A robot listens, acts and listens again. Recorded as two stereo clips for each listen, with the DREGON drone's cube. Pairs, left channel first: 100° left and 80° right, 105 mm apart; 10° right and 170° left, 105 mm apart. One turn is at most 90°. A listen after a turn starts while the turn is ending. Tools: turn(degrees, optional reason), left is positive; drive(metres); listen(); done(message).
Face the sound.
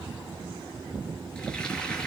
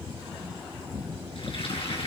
turn(degrees=20, reason="The frying: 20° left.")
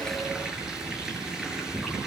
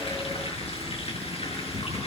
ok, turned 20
done("Facing the frying, over 4 m away.")